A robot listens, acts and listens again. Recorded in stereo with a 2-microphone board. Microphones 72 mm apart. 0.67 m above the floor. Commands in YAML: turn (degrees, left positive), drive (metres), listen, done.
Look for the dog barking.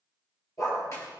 turn: 50
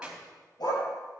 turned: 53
turn: 80
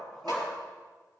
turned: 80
done: "Facing the dog barking."